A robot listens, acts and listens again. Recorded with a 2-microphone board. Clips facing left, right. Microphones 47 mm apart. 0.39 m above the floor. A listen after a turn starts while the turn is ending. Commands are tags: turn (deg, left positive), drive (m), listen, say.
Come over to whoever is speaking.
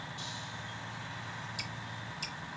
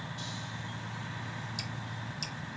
<listen/>
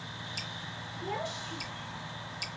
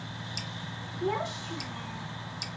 <turn deg="-55"/>
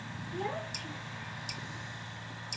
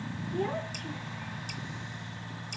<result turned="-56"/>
<drive m="1.0"/>
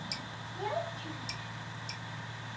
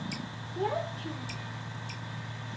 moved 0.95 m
<turn deg="-10"/>
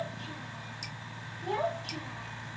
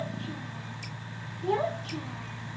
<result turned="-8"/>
<drive m="1.0"/>
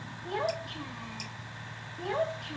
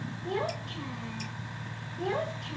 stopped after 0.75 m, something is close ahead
<say>Arrived at the child speaking, straight ahead.</say>